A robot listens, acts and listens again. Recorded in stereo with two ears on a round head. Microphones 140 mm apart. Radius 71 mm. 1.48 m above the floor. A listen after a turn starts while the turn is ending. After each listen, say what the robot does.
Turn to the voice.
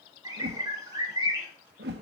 Keep listening.
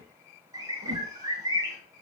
Keep listening.
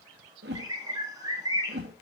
I can't make out anyone speaking to turn to.